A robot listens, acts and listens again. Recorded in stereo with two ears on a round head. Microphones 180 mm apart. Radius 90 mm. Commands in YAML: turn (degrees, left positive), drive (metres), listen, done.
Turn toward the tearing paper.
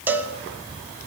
listen: true
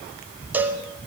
listen: true
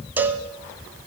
done: "I can't make out tearing paper to turn to."